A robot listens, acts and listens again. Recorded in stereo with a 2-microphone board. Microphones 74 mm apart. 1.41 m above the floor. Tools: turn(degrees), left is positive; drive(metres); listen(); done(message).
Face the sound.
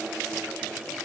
listen()
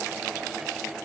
listen()
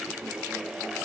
done("I can't make out anything to turn to.")